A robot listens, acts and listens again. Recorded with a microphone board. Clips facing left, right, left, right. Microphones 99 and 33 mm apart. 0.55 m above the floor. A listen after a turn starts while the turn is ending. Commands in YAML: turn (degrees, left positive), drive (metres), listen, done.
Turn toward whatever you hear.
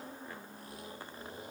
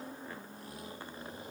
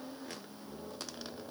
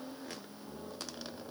listen: true
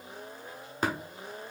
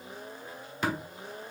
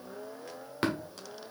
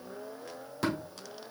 turn: 45
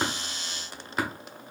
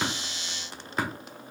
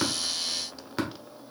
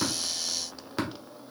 done: "Found it: tapping, straight ahead."